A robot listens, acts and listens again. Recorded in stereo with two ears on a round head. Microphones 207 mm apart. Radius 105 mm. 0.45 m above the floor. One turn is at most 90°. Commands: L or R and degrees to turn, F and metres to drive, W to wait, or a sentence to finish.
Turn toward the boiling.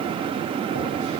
W
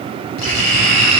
W
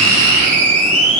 I can't make out boiling, only writing.